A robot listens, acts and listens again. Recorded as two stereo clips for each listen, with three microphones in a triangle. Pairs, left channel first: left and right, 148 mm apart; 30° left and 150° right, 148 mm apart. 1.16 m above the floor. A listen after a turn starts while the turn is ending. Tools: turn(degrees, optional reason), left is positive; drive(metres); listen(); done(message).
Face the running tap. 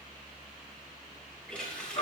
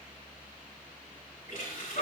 done("Found it: a running tap, straight ahead.")